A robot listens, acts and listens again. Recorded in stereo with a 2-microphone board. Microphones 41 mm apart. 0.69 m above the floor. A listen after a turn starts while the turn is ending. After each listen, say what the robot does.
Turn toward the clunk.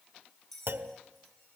Turn 65° right.
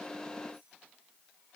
Keep listening.
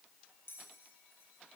I heard a clunk, but can't make it out now. It was about straight ahead or 50° right.